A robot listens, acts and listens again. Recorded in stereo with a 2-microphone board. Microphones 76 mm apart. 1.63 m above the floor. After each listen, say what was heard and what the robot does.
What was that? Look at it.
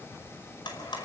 The blender: about 70° left or 110° left. Turn 70° left.
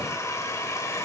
So it is at 40° left. Turn 40° left.
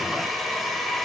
Found it: a blender, straight ahead, over 4 m away.